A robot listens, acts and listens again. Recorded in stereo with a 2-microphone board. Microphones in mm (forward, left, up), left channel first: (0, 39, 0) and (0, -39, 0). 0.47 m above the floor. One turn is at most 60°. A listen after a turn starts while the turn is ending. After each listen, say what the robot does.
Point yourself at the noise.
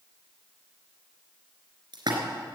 Turn 60° right.
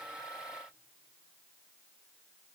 Keep listening.
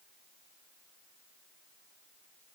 I heard a splash, but can't make it out now. It was about 5° right or 55° right.